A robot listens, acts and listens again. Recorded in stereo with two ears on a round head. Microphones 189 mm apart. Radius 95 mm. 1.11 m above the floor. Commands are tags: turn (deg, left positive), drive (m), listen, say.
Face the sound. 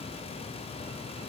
<listen/>
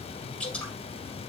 <turn deg="30"/>
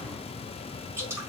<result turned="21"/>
<turn deg="-10"/>
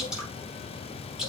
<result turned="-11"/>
<say>Facing the dripping.</say>